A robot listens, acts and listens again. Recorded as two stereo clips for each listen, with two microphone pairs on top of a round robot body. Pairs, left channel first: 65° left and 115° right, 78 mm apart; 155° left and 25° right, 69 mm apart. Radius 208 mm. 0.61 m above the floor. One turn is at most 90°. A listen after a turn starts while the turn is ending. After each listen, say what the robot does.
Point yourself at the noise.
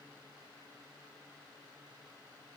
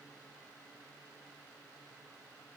Keep listening.
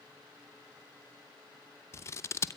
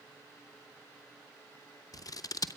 Turn 90° left.
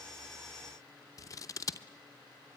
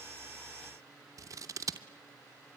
Turn 20° left.
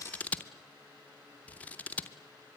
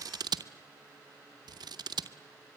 Facing the scissors.